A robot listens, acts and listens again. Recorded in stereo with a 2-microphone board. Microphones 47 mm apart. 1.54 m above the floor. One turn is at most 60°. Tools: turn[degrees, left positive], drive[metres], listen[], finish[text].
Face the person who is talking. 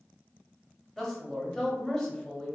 Action: turn[30]
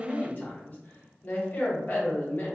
Thought: So it is at 145° left.
Action: turn[60]
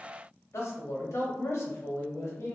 Thought: The man speaking is now 85° left.
Action: turn[60]
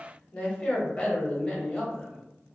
Thought: The man speaking is now 25° left.
Action: turn[25]
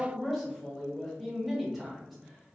Action: finish[Found it: a man speaking, straight ahead.]